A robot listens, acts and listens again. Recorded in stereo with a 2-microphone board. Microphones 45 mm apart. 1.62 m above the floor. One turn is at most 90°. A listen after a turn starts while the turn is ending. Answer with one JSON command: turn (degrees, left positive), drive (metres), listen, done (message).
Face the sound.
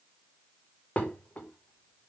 {"turn": 35}
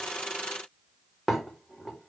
{"done": "Facing the dishes clattering, 2 to 4 m away."}